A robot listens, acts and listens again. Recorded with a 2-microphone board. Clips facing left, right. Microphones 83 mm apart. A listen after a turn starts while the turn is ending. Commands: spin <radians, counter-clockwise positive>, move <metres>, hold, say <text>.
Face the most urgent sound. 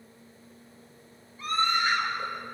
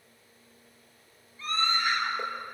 spin 0.26
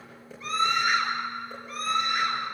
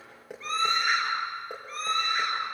say Found it: a scream, straight ahead, over 4 m away.